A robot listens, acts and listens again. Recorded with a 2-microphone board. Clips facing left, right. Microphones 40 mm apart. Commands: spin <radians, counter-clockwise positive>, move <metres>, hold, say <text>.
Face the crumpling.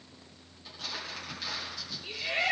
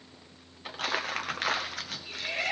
spin -0.96
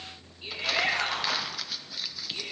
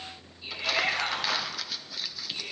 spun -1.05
say Found it: crumpling, straight ahead.